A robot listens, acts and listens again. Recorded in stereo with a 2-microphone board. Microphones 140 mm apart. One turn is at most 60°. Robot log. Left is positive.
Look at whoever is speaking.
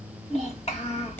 note: The child speaking: about 50° left or 130° left.
cmd yaw +50
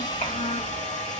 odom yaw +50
note: So it is at 80° left.
cmd yaw +60
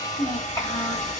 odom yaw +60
note: The child speaking is now 20° left.
cmd yaw +20
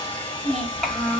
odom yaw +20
end: Facing the child speaking, 1 to 2 m away.